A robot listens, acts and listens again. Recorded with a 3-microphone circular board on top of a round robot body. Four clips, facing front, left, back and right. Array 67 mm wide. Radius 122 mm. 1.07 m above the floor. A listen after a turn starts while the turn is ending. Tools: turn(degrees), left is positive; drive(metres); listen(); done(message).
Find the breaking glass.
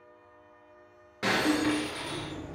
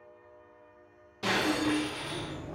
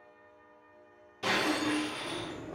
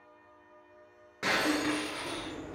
turn(degrees=-40)
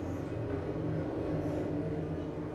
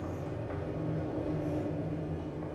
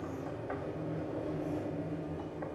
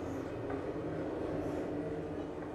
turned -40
done("I heard breaking glass from this way, but can't make it out now.")